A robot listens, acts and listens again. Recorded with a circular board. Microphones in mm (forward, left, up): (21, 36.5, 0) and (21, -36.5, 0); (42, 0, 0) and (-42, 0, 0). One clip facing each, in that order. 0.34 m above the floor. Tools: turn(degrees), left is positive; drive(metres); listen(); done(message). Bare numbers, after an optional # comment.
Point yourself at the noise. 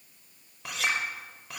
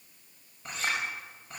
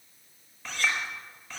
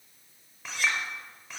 # The clink: 100° left.
turn(100)
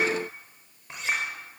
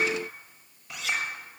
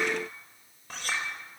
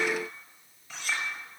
# The clink is now 40° left.
turn(40)
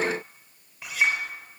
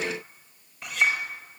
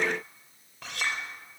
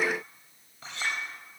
# The clink is now 10° left.
turn(10)
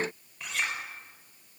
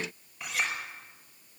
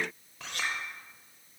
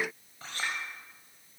done("Facing the clink, over 4 m away.")